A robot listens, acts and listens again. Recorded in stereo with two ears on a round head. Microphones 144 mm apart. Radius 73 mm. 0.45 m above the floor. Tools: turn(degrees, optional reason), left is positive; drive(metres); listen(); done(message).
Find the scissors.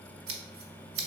turn(degrees=-65, reason="The scissors: about 65° right or 115° right.")
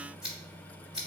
done("Facing the scissors, 1 to 2 m away.")